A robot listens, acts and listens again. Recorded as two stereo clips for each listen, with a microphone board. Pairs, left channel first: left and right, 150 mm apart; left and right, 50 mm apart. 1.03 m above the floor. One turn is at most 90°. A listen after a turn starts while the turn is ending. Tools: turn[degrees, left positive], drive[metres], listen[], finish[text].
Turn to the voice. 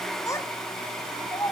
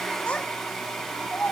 Thought: The child speaking: about 20° left or 160° left.
Action: turn[20]
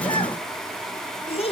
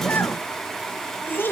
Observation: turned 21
Thought: So it is at 140° left.
Action: turn[90]
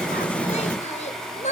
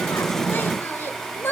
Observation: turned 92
Thought: The child speaking is now 45° left.
Action: turn[45]
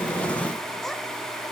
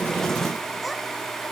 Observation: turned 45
Action: listen[]
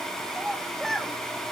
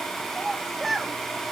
Action: finish[Found it: a child speaking, straight ahead.]